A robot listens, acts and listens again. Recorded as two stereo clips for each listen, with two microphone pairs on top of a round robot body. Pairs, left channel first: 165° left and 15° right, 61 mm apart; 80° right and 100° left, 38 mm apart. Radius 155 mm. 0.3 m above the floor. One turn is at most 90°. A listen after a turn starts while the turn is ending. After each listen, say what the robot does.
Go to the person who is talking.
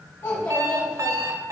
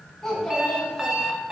Turn 90° right.
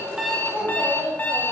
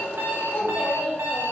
Turn 75° right.
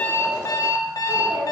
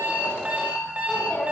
Turn 20° right.
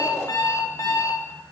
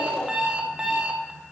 Keep listening.
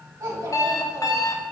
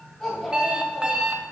Drive 1.0 m forward.
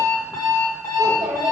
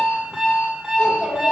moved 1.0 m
Drive 1.0 m forward.
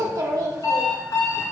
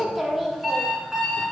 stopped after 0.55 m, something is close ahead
Arrived at the child speaking, straight ahead.